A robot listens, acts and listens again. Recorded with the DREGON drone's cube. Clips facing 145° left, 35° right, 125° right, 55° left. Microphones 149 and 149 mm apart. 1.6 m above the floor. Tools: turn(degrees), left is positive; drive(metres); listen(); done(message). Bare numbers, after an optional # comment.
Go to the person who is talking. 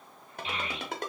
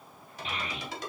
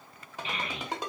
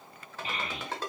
# The child speaking: 10° left.
turn(10)
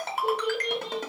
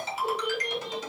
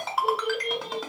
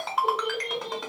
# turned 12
drive(1.0)
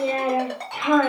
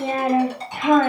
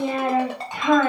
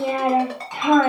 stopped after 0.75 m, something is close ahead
done("Arrived at the child speaking, straight ahead.")